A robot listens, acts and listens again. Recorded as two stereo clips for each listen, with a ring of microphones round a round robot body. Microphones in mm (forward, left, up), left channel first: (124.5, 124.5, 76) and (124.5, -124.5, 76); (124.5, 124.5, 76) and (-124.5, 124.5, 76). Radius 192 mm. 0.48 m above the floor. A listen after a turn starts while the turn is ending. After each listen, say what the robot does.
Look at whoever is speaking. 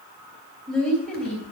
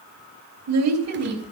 Turn 175° left.
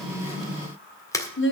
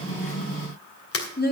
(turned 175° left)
Turn 50° left.
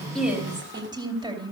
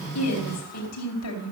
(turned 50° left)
Turn 15° right.
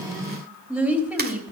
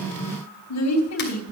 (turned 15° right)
Facing the woman speaking.